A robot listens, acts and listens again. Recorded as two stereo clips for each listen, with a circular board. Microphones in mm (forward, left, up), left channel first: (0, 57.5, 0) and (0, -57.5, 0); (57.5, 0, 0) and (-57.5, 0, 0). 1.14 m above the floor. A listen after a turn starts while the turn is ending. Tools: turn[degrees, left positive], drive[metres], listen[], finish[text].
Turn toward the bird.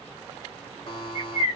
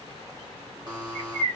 Thought: The bird: 165° right.
Action: turn[-165]
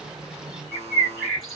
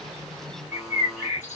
Action: finish[Found it: a bird, straight ahead.]